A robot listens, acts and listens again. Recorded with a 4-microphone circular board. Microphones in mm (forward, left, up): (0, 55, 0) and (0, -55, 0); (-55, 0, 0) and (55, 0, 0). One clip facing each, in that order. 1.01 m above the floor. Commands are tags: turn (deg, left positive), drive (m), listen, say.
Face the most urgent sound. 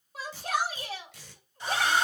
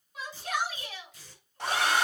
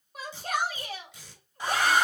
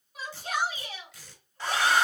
<turn deg="140"/>
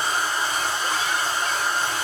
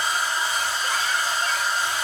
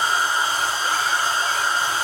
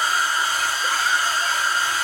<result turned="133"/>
<turn deg="10"/>
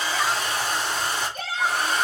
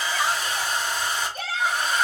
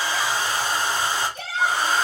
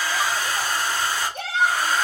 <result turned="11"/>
<say>Facing the shout, 2 to 4 m away.</say>